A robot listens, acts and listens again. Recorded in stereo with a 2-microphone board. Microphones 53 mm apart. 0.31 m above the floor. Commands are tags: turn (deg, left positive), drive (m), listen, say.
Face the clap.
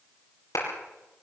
<turn deg="90"/>
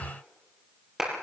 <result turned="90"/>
<turn deg="-10"/>
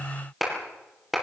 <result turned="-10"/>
<say>Found it: a clap, straight ahead.</say>